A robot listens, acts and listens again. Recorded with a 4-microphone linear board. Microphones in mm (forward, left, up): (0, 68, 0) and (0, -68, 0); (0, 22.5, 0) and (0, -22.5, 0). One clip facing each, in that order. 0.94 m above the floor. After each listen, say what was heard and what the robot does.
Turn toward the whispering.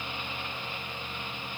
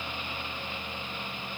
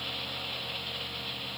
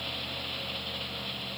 Keep listening.
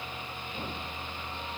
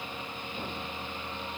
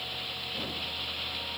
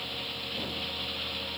Keep listening.
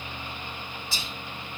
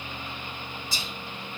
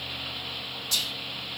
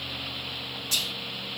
The whispering: about 40° right or 140° right. Turn 40° right.
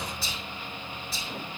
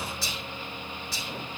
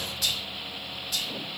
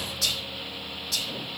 So it is at 95° right. Turn 95° right.
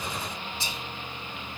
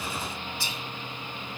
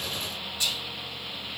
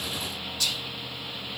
The whispering is now 20° left. Turn 20° left.
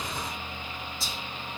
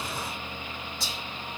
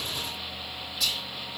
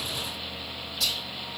Found it: whispering, straight ahead.